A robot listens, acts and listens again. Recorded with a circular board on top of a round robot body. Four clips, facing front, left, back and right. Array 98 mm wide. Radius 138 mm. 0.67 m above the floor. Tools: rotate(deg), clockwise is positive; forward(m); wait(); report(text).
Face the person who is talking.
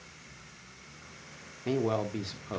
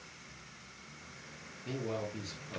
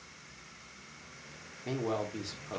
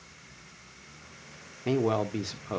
rotate(80)
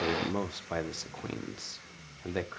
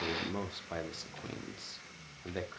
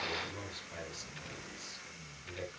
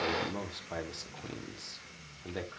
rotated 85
report("Facing the man speaking, 1 to 2 m away.")